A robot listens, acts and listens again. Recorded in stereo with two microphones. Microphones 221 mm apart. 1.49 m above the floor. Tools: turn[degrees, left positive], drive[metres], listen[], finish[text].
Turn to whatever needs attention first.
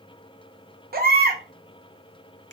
Thought: The baby crying: about 45° right or 135° right.
Action: turn[-45]
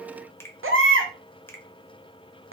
Thought: So it is at 85° right.
Action: turn[-85]
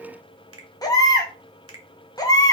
Thought: The baby crying is now 20° left.
Action: turn[20]
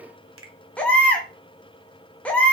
Action: finish[Facing the baby crying.]